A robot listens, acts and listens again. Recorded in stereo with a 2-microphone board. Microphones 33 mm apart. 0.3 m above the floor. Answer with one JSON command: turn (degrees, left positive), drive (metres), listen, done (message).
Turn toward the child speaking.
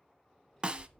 {"turn": 15}
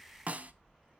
{"done": "Facing the child speaking."}